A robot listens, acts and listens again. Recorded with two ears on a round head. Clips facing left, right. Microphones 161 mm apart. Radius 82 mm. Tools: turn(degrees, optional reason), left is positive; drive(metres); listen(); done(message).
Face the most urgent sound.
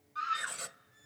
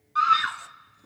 turn(degrees=-90)
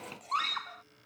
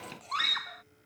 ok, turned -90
turn(degrees=-10, reason="So it is at 10° right.")
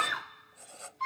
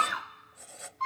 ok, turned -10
done("Facing the scream.")